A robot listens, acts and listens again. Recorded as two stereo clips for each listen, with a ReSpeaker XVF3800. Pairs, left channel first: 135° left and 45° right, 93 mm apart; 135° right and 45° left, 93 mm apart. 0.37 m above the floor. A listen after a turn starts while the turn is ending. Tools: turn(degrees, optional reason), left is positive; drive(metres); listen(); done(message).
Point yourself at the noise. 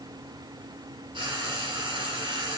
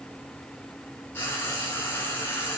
turn(degrees=-70, reason="The frying: 70° right.")
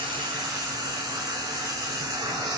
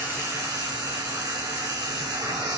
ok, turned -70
done("Facing the frying.")